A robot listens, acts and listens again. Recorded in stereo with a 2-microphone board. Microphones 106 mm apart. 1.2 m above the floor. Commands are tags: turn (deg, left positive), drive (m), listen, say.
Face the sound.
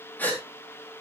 <turn deg="15"/>
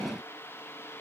<listen/>
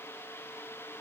<say>I heard a gasp, but can't make it out now. It was about straight ahead or 150° left.</say>